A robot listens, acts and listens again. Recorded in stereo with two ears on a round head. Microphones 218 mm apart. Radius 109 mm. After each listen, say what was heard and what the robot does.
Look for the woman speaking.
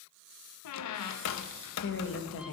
The woman speaking: about 60° left or 120° left. Turn 60° left.
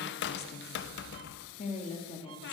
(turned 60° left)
So it is at 20° left. Turn 20° left.
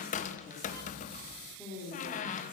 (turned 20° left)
Found it: a woman speaking, straight ahead, 2 to 4 m away.